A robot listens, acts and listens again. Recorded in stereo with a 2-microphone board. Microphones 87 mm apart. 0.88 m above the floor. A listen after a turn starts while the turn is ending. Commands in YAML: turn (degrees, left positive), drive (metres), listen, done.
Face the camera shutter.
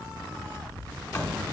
listen: true
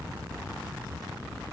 listen: true
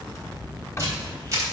turn: -40
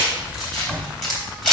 done: "Found it: a camera shutter, straight ahead, 2 to 4 m away."